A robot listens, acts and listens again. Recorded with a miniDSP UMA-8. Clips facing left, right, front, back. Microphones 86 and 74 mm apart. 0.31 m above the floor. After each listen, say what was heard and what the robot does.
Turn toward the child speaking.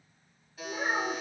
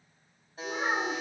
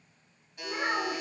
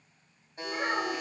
The child speaking: 90° right. Turn 90° right.
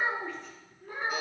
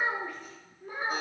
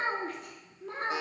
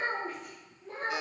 The child speaking is now 15° right. Turn 15° right.
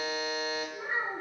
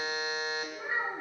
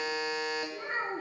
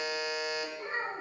Facing the child speaking, 2 to 4 m away.